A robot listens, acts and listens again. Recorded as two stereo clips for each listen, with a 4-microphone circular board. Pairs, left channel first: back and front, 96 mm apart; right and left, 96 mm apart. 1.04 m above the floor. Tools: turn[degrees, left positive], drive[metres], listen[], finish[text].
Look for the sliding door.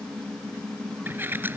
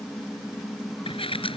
Thought: The sliding door: 70° right.
Action: turn[-70]
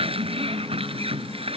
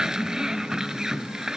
Action: finish[Facing the sliding door.]